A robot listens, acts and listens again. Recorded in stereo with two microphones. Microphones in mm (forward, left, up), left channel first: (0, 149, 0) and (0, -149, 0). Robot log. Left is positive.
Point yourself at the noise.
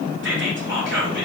note: The whispering: about 45° right or 135° right.
cmd yaw -45
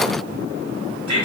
note: So it is at 90° right.
cmd yaw -90
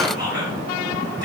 note: The whispering is now 15° right.
cmd yaw -15
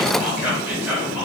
end: Found it: whispering, straight ahead.